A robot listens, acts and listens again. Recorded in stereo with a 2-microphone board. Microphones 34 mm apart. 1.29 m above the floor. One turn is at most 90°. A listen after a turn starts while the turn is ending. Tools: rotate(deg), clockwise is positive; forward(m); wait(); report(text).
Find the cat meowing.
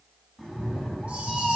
rotate(-15)
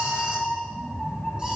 rotate(-25)
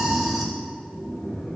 rotate(-20)
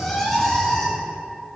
rotate(-30)
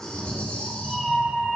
rotate(10)
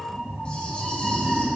report("Found it: a cat meowing, straight ahead, 2 to 4 m away.")